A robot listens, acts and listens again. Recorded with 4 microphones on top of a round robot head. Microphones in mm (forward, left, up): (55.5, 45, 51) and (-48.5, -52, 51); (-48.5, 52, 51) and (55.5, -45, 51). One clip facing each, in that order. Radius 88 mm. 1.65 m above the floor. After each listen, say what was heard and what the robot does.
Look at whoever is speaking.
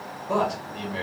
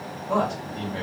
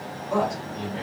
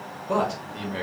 The man speaking: 35° right. Turn 35° right.
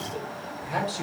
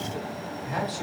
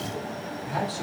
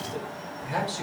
The man speaking is now 20° right. Turn 20° right.
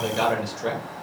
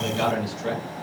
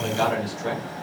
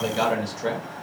Found it: a man speaking, straight ahead.